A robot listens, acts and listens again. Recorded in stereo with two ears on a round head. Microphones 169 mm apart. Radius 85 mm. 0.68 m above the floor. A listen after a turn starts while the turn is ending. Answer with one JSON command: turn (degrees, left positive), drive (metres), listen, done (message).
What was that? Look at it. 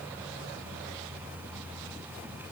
{"listen": true}
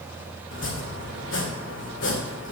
{"turn": 65}
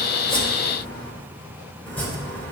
{"turn": 10}
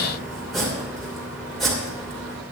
{"done": "Found it: chopping, straight ahead, 2 to 4 m away."}